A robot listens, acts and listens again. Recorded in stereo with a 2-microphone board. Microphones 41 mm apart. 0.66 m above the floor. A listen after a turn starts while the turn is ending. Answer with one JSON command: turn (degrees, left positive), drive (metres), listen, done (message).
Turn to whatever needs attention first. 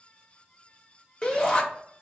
{"turn": 20}
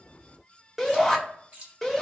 {"done": "Facing the shout."}